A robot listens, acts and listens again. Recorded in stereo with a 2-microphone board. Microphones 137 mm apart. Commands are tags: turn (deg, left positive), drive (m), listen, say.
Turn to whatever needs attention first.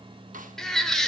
<turn deg="30"/>
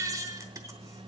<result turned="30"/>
<turn deg="-25"/>
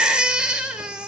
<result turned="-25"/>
<say>Facing the baby crying.</say>